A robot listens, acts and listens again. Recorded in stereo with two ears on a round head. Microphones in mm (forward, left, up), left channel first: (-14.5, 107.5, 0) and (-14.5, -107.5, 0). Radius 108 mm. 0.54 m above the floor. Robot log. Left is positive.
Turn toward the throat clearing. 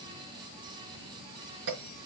cmd idle
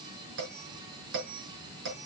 cmd idle
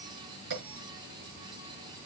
end: I can't make out throat clearing to turn to.